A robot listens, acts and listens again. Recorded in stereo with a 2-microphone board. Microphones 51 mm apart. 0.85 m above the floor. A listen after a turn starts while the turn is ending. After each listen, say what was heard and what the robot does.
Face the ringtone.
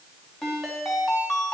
Turn 30° left.
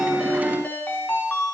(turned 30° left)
So it is at 145° left. Turn 145° left.
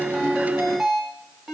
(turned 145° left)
Facing the ringtone, 2 to 4 m away.